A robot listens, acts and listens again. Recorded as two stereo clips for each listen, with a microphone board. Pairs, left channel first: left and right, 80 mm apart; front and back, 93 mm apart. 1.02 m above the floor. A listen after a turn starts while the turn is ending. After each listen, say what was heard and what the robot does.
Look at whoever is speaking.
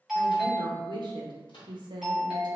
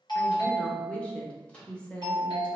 The woman speaking: 75° right. Turn 75° right.
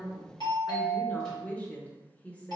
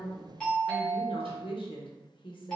The woman speaking is now 15° left. Turn 15° left.
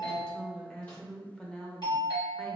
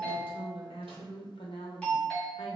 The woman speaking is now 10° left. Turn 10° left.
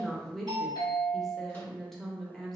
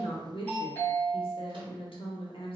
Facing the woman speaking.